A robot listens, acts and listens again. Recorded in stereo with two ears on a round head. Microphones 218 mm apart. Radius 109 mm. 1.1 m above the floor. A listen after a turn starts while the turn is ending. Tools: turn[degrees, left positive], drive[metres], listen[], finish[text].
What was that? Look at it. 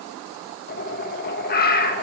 Thought: The bird: about 40° left or 140° left.
Action: turn[40]
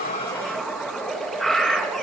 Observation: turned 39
Action: finish[Facing the bird, 1 to 2 m away.]